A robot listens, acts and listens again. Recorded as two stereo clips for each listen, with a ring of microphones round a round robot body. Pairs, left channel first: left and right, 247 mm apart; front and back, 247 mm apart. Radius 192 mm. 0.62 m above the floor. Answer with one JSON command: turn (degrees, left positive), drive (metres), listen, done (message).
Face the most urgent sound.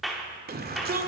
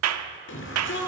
{"turn": -40}
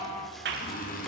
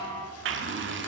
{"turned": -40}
{"listen": true}
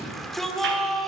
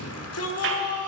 {"done": "Facing the shout."}